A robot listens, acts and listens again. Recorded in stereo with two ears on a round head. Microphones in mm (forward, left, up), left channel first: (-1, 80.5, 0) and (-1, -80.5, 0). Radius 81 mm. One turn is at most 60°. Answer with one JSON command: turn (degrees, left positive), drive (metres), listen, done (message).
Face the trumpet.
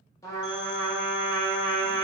{"turn": 20}
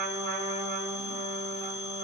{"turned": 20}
{"turn": 60}
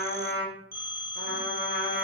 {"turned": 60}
{"turn": 60}
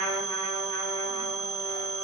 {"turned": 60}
{"turn": 20}
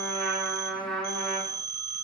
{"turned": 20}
{"done": "Found it: a trumpet, straight ahead."}